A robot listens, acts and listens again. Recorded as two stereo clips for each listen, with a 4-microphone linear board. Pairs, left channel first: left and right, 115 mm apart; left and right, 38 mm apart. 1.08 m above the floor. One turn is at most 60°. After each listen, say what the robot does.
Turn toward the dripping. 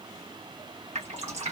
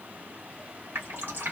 Turn 60° right.
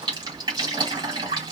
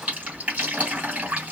Turn 40° right.
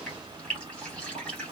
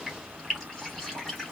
Facing the dripping, 2 to 4 m away.